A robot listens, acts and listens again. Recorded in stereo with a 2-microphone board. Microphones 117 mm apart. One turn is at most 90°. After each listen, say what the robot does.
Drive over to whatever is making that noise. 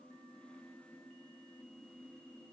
Keep listening.
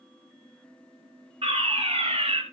Turn 55° right.
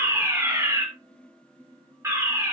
Turn 30° right.
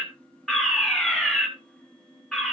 Drive 1.0 m forward.
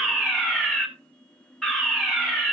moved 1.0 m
Drive 1.0 m forward.
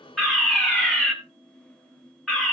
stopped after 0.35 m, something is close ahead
I am next to the fire alarm.